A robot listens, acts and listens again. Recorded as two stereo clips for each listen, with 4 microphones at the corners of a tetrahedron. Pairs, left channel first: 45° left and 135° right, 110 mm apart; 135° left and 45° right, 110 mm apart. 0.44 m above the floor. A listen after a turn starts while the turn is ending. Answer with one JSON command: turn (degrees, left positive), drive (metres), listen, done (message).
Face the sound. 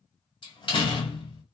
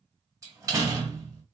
{"turn": 15}
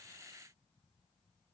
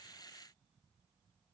{"done": "Facing where the door slam came from. I can't hear it now."}